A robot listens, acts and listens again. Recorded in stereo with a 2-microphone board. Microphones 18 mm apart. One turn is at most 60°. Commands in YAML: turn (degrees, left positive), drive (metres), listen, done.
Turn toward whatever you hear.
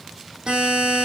turn: -60
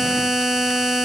turn: -20
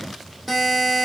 done: "Found it: a buzzer, straight ahead, over 4 m away."